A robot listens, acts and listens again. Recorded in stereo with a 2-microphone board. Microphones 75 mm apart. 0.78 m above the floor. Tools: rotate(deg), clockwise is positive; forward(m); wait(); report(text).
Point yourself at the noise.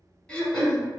rotate(-30)
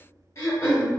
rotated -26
rotate(-145)
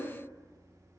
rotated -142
wait()
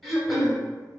report("Found it: throat clearing, straight ahead.")